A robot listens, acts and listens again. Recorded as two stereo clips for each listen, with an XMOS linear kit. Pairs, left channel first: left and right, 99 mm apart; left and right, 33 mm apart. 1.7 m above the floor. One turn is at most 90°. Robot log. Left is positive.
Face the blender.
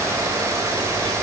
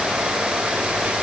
cmd idle
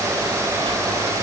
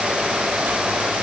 cmd idle
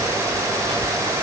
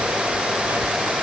end: I can't make out a blender to turn to.